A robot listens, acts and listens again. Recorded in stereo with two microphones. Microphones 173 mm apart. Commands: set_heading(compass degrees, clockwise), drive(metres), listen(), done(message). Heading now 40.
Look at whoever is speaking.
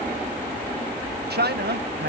set_heading(130)
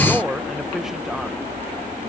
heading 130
done("Found it: a man speaking, straight ahead.")